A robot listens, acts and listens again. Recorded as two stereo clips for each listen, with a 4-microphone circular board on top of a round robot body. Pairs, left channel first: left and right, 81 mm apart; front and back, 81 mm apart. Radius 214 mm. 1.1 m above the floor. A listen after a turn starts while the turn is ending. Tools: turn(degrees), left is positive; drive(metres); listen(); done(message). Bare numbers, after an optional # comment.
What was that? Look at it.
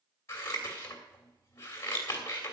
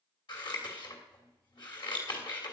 # The scissors: 30° left.
turn(30)
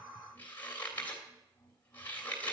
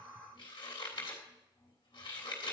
# The scissors is now 20° left.
turn(20)
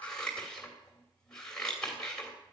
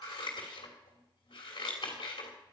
# The scissors is now 10° left.
turn(10)
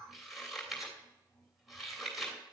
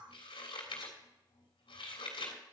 done("Found it: scissors, straight ahead, 2 to 4 m away.")